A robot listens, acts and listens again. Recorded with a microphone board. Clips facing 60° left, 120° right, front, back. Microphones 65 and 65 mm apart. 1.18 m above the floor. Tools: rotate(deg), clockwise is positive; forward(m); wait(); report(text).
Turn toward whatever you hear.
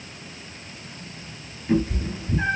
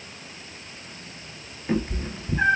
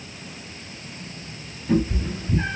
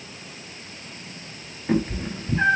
rotate(160)
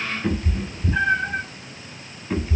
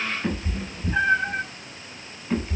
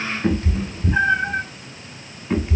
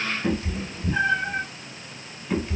rotate(20)
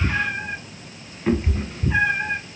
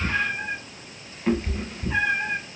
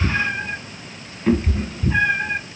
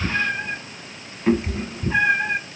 rotate(-135)
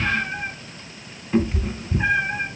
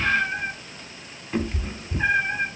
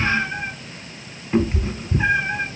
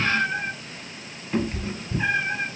rotate(10)
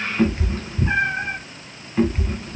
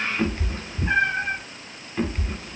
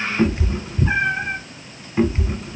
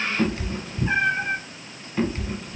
report("Facing the cat meowing.")